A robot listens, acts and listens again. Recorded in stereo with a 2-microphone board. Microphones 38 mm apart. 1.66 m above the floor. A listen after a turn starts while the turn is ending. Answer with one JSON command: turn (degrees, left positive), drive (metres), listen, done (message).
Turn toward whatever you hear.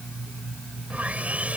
{"turn": -35}
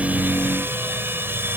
{"turn": -105}
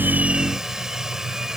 {"turn": -15}
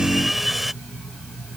{"done": "Found it: sawing, straight ahead."}